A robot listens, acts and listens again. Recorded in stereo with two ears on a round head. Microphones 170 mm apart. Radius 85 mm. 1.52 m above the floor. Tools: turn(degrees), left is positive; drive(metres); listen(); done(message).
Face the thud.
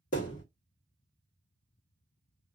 turn(degrees=45)
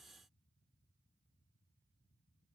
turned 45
listen()
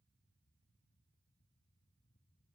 done("I heard a thud, but can't make it out now. It was about straight ahead or 90° left.")